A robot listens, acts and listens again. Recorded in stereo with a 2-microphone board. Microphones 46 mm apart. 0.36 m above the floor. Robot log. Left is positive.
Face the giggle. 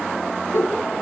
note: The giggle: about 60° left or 120° left.
cmd yaw +60
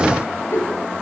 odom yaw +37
note: So it is at 80° left.
cmd yaw +80
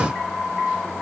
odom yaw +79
cmd idle
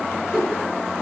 end: Found it: a giggle, straight ahead.